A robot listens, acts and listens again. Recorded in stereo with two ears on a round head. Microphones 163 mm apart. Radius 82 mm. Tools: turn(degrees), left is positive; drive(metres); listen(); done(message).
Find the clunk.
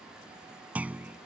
turn(degrees=-30)
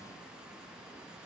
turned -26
listen()
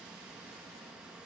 done("I heard a clunk, but can't make it out now. It was about 20° left or 145° right.")